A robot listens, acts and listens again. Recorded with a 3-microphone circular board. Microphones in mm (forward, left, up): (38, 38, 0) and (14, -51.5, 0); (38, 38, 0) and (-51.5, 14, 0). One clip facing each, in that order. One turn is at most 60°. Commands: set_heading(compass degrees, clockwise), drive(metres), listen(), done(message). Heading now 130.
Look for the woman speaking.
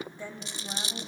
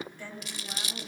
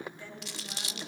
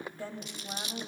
set_heading(70)
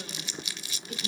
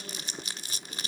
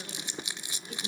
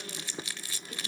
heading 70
set_heading(10)
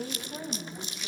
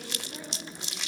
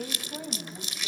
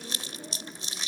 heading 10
set_heading(355)
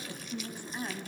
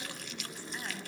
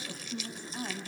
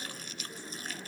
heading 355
done("Found it: a woman speaking, straight ahead.")